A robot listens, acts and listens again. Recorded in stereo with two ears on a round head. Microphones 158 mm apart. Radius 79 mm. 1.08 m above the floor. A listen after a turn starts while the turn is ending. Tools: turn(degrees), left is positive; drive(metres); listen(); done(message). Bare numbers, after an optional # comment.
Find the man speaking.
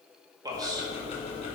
# The man speaking: about 25° right or 155° right.
turn(-25)
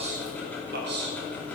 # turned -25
# So it is at 115° right.
turn(-115)
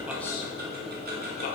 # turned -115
listen()
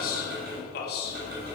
# The man speaking is now 60° left.
turn(60)
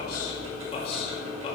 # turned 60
# The man speaking is now 30° left.
turn(30)
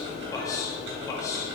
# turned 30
# The man speaking is now 20° left.
turn(20)
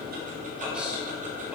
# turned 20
listen()
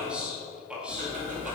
done("Found it: a man speaking, straight ahead, 2 to 4 m away.")